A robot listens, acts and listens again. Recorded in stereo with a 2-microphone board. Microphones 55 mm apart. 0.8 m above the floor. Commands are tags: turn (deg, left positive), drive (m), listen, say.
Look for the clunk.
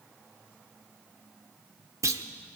<turn deg="-90"/>
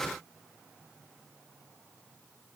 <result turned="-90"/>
<say>Facing where the clunk came from. I can't hear it now.</say>